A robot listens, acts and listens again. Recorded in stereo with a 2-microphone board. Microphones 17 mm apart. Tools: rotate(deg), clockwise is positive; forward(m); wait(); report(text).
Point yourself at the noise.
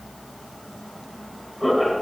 rotate(30)
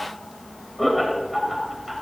rotate(30)
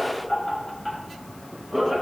rotate(-30)
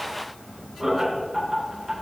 rotate(30)
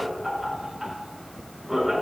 rotate(10)
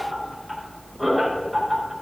report("Facing the laughter, 2 to 4 m away.")